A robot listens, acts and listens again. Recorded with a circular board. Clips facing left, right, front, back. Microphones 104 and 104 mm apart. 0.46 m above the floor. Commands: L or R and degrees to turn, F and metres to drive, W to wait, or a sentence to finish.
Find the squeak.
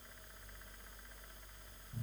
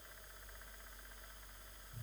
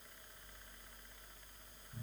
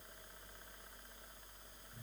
W
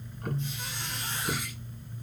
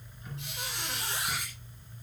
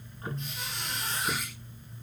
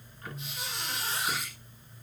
R95
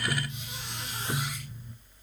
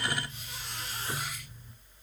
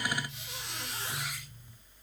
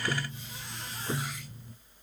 W
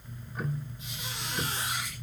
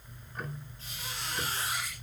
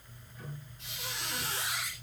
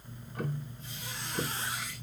L15
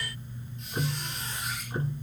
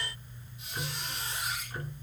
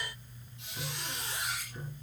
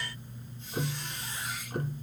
Facing the squeak.